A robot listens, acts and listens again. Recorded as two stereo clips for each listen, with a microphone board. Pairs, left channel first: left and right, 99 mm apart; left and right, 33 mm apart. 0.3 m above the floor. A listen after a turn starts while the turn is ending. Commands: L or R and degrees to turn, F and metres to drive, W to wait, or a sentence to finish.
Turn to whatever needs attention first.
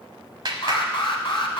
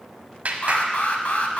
L60
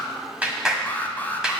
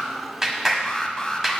L20
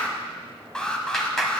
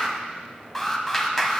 L10
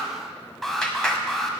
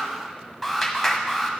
Facing the alarm.